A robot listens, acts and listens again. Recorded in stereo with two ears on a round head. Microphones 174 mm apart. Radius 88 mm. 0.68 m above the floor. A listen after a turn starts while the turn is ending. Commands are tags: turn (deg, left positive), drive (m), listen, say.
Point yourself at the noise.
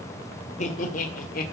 <turn deg="45"/>
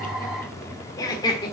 <turn deg="25"/>
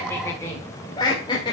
<turn deg="25"/>
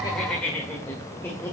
<turn deg="10"/>
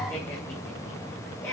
<turn deg="10"/>
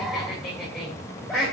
<say>Found it: laughter, straight ahead.</say>